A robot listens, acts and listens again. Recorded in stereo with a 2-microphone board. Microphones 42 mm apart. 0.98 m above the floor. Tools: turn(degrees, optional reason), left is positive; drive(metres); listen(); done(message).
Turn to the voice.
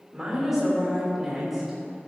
turn(degrees=-30)
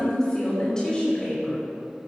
turn(degrees=20, reason="So it is at 20° left.")
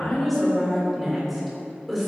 done("Found it: a woman speaking, straight ahead, 2 to 4 m away.")